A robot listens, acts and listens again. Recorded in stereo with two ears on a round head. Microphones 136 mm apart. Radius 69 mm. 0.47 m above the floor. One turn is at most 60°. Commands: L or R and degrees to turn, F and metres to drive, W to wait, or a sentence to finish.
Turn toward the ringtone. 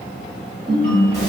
R60
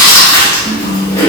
W
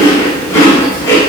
W
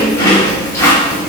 I heard a ringtone, but can't make it out now. It was about straight ahead or 60° right.